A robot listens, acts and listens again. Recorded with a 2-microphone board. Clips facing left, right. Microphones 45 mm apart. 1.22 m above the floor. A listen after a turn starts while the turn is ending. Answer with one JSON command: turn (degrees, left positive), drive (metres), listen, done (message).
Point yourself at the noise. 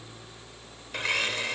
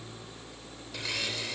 {"turn": 55}
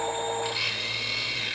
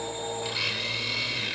{"done": "Facing the blender."}